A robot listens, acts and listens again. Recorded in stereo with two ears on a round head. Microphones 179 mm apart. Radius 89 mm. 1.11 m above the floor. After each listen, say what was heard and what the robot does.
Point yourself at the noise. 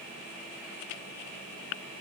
Keep listening.
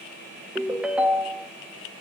Turn 30° right.
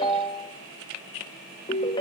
So it is at 25° left. Turn 25° left.
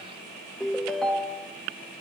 Found it: a ringtone, straight ahead, 1 to 2 m away.